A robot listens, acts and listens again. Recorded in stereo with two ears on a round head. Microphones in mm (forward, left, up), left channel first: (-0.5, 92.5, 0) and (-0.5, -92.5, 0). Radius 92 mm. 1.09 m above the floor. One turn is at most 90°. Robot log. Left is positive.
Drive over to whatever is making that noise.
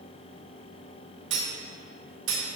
note: The cutlery clinking: about 60° right or 120° right.
cmd yaw -60
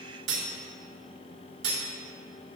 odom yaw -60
note: So it is at 60° right.
cmd yaw -60
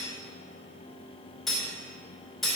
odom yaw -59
cmd fwd 1.0
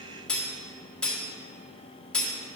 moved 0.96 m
cmd fwd 1.0
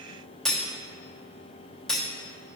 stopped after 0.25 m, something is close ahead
end: Arrived at the cutlery clinking, straight ahead.